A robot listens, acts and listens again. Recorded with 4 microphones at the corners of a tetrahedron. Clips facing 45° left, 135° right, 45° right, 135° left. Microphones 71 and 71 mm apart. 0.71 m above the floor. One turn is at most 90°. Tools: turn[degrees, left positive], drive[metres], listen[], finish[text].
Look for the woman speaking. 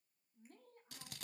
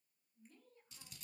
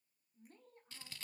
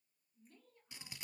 Action: finish[Found it: a woman speaking, straight ahead, over 4 m away.]